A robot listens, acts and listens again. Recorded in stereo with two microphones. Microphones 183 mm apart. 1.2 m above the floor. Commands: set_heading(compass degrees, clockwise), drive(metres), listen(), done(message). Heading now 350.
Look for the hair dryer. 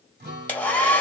set_heading(320)
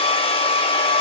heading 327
set_heading(177)
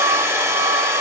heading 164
set_heading(179)
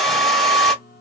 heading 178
done("Facing the hair dryer.")